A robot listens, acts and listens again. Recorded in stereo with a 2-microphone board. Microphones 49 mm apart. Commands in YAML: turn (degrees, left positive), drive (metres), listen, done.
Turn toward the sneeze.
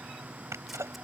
turn: -90
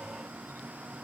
done: "I heard a sneeze from this way, but can't make it out now."